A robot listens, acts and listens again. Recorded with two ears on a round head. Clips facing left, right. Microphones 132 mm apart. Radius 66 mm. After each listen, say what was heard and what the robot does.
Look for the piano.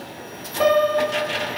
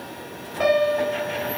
The piano: about 55° left or 125° left. Turn 55° left.
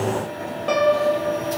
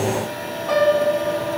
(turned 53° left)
So it is at 75° left. Turn 75° left.
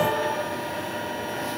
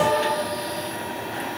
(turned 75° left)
Keep listening.
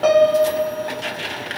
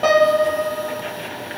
Facing the piano.